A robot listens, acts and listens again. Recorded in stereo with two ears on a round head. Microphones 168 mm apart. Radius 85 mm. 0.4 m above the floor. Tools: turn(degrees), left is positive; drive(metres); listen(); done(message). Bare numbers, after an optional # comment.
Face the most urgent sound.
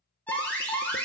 turn(30)
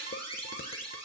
# So it is at 25° right.
turn(-25)
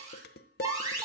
# The alarm is now 20° right.
turn(-20)
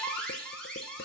done("Found it: an alarm, straight ahead, over 4 m away.")